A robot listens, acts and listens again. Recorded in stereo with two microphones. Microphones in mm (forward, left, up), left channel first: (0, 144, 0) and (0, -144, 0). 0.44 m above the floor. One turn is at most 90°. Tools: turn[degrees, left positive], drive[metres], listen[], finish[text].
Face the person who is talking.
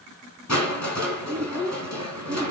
Action: turn[30]
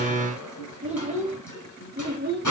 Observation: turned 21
Thought: So it is at 30° right.
Action: turn[-30]
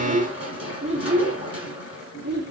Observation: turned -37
Thought: The child speaking is now 35° right.
Action: turn[-35]
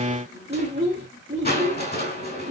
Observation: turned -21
Thought: The child speaking is now 20° right.
Action: turn[-20]
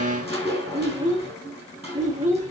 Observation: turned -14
Thought: The child speaking is now 10° right.
Action: turn[-10]
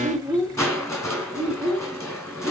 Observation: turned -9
Action: finish[Found it: a child speaking, straight ahead.]